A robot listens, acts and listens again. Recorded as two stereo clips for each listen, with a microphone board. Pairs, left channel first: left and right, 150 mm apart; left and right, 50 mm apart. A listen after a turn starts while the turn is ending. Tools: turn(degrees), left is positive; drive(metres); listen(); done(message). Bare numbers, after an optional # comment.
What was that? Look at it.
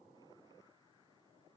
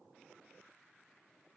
listen()
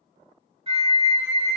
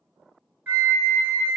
# The flute: about 40° right or 140° right.
turn(-40)
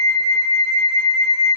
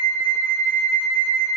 done("Found it: a flute, straight ahead, under 1 m away.")